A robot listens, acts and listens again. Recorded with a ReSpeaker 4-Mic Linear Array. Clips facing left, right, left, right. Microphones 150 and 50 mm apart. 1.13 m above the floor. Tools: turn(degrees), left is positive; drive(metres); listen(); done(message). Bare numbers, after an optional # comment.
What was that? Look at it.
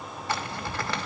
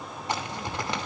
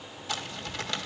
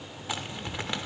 # The zipper: about 20° right or 160° right.
turn(-20)
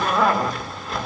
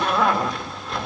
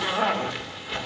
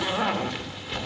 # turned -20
done("Found it: a zipper, straight ahead, 2 to 4 m away.")